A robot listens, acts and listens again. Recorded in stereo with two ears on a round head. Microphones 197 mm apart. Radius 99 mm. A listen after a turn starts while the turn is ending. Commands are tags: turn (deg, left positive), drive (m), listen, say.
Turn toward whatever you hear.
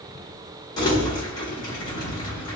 <turn deg="20"/>
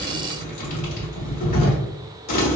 <turn deg="140"/>
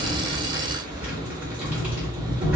<turn deg="-10"/>
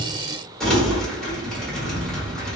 <say>Facing the crumpling, 1 to 2 m away.</say>